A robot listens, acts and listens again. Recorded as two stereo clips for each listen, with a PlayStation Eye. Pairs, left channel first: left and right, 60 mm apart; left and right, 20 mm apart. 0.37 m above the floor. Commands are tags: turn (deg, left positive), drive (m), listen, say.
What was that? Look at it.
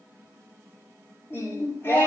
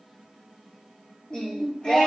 <turn deg="40"/>
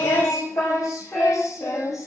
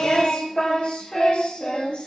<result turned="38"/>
<turn deg="110"/>
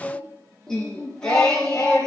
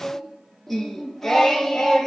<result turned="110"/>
<turn deg="10"/>
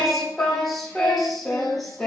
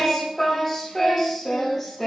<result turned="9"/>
<say>Found it: singing, straight ahead, over 4 m away.</say>